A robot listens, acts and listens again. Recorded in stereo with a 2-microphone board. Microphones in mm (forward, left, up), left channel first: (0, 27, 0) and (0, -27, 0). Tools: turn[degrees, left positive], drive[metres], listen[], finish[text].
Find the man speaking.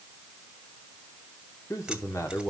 Thought: The man speaking: about 65° left or 115° left.
Action: turn[65]
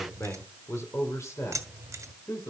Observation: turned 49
Thought: So it is at 70° left.
Action: turn[70]
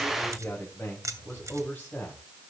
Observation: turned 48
Thought: The man speaking is now 35° left.
Action: turn[35]
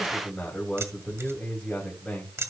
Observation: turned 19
Thought: The man speaking is now 15° left.
Action: turn[15]
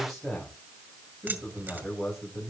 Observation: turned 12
Action: finish[Facing the man speaking, 2 to 4 m away.]